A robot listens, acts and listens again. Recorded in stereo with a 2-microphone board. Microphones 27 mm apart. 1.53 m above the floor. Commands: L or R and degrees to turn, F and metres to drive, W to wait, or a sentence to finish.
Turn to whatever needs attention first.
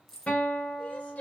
L60
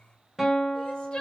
L45
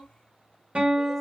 W
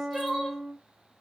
Facing the crying, 1 to 2 m away.